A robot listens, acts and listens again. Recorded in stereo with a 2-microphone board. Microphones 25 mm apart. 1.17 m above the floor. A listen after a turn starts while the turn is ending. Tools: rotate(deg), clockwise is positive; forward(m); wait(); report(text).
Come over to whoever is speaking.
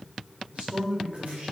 rotate(60)
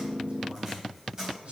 rotate(60)
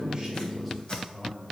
forward(1.0)
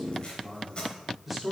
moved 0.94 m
forward(1.0)
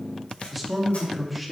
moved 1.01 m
forward(1.0)
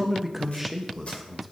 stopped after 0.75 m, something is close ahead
report("Arrived at the man speaking, straight ahead.")